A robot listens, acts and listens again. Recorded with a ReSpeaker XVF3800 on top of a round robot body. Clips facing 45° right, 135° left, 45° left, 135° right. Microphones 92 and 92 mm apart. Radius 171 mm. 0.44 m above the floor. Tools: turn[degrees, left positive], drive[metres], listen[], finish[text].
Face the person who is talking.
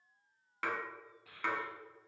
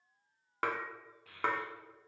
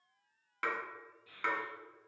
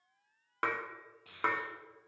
Thought: The child speaking: 130° right.
Action: turn[-130]
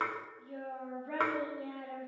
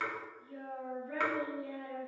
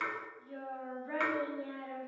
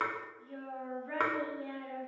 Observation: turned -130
Thought: The child speaking is now 40° right.
Action: turn[-40]
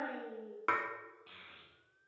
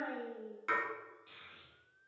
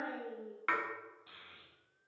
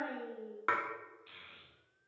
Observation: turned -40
Thought: The child speaking is now 20° right.
Action: turn[-20]
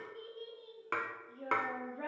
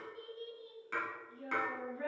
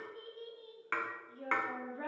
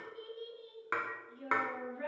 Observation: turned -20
Action: finish[Found it: a child speaking, straight ahead, 1 to 2 m away.]